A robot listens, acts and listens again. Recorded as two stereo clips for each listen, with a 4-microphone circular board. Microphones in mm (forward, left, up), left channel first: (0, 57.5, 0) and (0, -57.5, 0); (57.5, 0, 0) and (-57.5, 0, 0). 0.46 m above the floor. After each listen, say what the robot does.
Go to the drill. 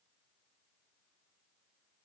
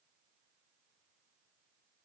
Keep listening.
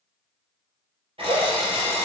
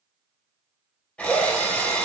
Turn 80° right.
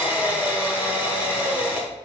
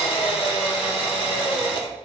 Turn 15° right.
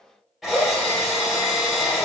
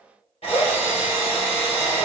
Drive 1.0 m forward.
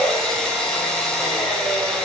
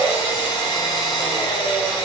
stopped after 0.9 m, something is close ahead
Turn 10° left.
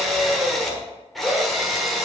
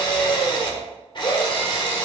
Arrived at the drill, straight ahead.